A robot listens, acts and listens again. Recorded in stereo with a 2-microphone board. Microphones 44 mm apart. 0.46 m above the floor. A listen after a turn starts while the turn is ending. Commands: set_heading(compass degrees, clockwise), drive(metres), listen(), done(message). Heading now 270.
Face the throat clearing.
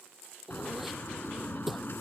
set_heading(300)
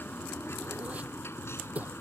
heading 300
set_heading(90)
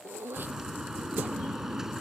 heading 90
listen()
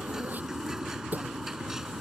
set_heading(130)
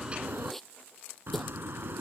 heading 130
done("Facing the throat clearing.")